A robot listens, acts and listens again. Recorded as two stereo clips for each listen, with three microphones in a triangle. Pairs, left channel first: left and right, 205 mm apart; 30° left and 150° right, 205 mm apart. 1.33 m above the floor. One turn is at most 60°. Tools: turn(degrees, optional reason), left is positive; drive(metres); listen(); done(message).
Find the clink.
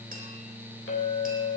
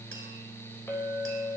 turn(degrees=60, reason="The clink: 105° left.")
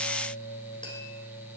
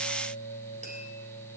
turn(degrees=45, reason="Nothing new. It was at 45° left.")
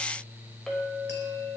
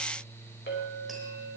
done("Facing the clink, over 4 m away.")